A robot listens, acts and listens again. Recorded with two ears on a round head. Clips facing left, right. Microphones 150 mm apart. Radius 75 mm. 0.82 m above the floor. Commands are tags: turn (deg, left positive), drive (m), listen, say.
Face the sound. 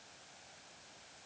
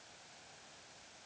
<listen/>
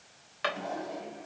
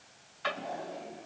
<turn deg="90"/>
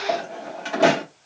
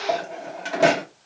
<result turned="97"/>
<say>Facing the drawer, 2 to 4 m away.</say>